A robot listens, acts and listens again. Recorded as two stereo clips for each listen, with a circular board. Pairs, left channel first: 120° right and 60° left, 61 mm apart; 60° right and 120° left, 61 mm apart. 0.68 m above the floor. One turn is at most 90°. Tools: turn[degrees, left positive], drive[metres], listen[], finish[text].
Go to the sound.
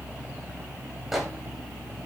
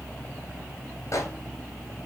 Thought: The microwave: 25° right.
Action: turn[-25]
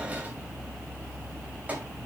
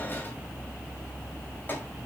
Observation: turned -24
Action: listen[]
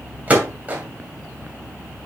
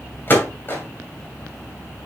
Action: drive[1.0]
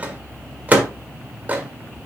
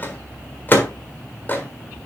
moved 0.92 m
Action: drive[1.0]
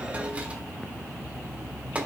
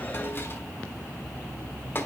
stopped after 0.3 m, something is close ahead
Action: listen[]
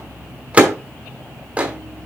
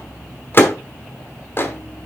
Thought: The microwave is now 10° right.
Action: turn[-10]
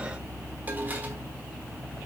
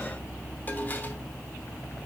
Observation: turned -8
Action: listen[]
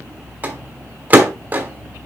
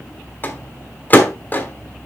Action: finish[Arrived at the microwave, straight ahead.]